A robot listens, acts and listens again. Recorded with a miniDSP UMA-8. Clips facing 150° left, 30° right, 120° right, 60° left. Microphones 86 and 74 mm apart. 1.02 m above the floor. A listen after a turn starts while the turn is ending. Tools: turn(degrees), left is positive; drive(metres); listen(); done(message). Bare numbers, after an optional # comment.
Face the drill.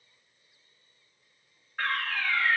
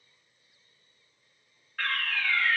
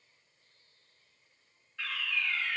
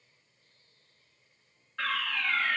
listen()
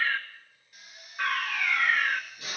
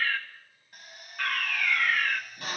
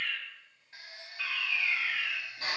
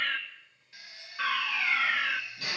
# The drill: 65° right.
turn(-65)
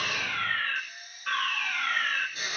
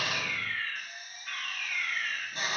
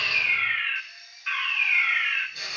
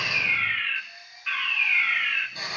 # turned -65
# The drill is now 10° left.
turn(10)
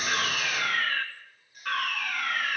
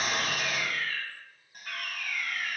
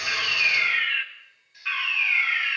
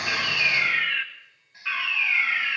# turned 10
listen()
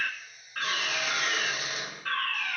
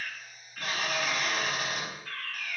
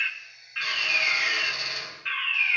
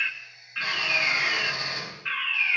done("Found it: a drill, straight ahead.")